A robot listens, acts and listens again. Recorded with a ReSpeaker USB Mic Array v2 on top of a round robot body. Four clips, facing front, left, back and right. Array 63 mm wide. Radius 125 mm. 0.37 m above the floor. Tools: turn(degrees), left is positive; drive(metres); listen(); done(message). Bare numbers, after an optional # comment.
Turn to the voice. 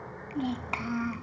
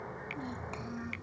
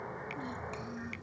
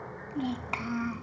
# The child speaking: 40° right.
turn(-40)
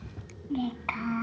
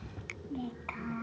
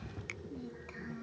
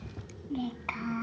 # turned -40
# The child speaking is now 15° right.
turn(-15)
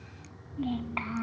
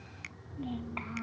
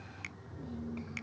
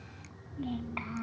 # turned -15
done("Facing the child speaking.")